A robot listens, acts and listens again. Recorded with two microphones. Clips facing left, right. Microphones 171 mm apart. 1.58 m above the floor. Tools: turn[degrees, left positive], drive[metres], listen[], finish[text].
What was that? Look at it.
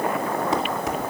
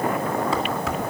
Thought: The dishes clattering: about 20° left or 160° left.
Action: turn[20]
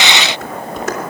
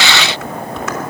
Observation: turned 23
Thought: So it is at 135° left.
Action: turn[135]
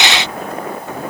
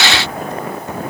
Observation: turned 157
Thought: Nothing new. It was at 20° right.
Action: turn[-20]
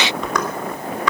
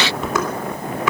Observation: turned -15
Action: finish[Found it: dishes clattering, straight ahead, 2 to 4 m away.]